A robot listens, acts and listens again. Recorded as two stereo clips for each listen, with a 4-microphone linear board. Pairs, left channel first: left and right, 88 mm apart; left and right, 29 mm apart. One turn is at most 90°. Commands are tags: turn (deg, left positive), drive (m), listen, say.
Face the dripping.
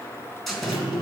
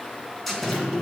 <turn deg="50"/>
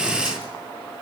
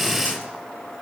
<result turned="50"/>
<listen/>
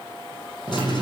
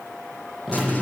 <say>Facing the dripping.</say>